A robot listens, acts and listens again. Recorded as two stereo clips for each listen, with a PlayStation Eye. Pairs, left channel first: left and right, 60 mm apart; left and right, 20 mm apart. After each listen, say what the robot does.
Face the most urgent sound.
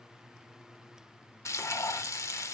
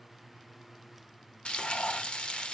Keep listening.
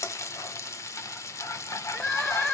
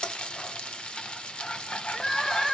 Turn 20° left.
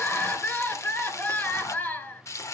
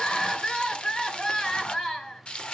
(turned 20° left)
Turn 145° left.
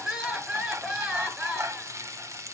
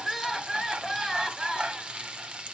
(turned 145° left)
Turn 20° right.
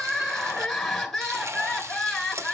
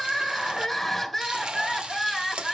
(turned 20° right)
Facing the crying, 2 to 4 m away.